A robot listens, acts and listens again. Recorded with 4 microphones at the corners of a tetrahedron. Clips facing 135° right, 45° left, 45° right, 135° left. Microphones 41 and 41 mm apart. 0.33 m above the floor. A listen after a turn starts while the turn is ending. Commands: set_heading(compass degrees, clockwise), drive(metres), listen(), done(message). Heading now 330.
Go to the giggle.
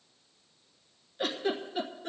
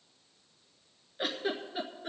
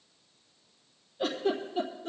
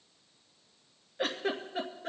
set_heading(205)
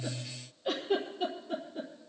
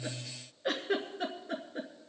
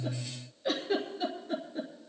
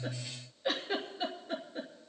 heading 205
set_heading(145)
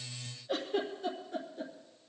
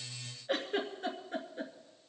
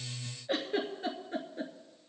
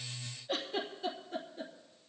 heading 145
set_heading(135)
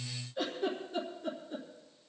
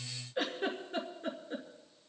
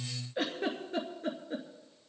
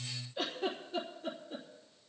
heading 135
drive(1.0)
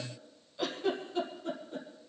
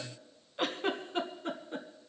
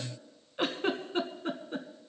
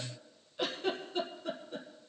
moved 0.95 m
drive(1.0)
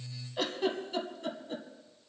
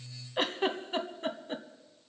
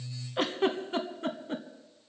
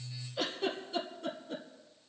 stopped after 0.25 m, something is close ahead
done("Arrived at the giggle, straight ahead.")